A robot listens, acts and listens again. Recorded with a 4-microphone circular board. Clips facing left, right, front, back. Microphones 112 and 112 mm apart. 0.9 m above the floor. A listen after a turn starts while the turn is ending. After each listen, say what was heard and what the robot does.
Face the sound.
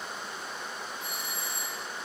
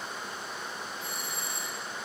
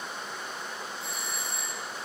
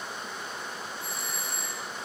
The doorbell: 145° right. Turn 145° right.
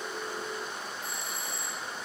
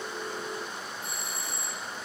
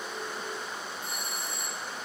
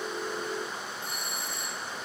The doorbell is now 30° right. Turn 30° right.
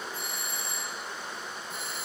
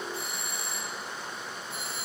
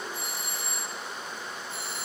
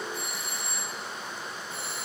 Facing the doorbell, 2 to 4 m away.